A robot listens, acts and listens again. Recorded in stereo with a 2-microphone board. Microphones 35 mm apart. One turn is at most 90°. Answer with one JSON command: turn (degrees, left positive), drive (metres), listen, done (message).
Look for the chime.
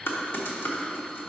{"listen": true}
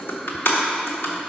{"listen": true}
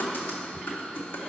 {"done": "I can't make out a chime, only typing on a keyboard."}